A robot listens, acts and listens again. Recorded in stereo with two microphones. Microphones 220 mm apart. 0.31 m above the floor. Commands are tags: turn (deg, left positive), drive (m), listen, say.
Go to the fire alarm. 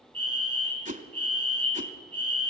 <turn deg="45"/>
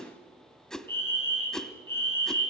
<turn deg="15"/>
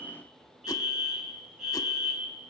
<drive m="1.0"/>
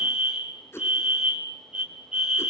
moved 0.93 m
<drive m="1.0"/>
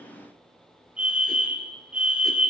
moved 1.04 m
<turn deg="-15"/>
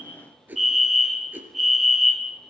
<drive m="1.0"/>
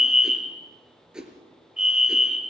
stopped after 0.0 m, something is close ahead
<say>Arrived at the fire alarm, straight ahead.</say>